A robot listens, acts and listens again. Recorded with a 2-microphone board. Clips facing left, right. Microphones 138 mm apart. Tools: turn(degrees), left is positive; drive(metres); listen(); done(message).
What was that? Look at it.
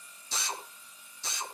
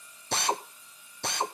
turn(degrees=-65)
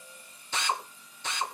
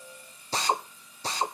turn(degrees=-40)
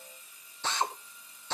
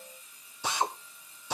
turn(degrees=-10)
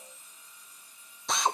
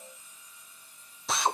done("Found it: a drill, straight ahead.")